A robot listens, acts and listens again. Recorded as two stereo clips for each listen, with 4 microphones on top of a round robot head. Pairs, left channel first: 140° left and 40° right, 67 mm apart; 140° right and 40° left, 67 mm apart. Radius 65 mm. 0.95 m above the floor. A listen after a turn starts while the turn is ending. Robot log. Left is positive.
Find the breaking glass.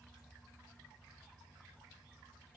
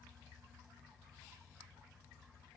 cmd idle
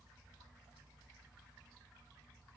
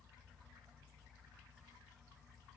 cmd idle
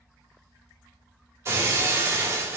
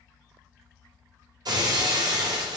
note: The breaking glass: 15° left.
cmd yaw +15
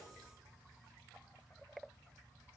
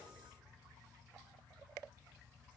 end: Facing where the breaking glass came from. I can't hear it now.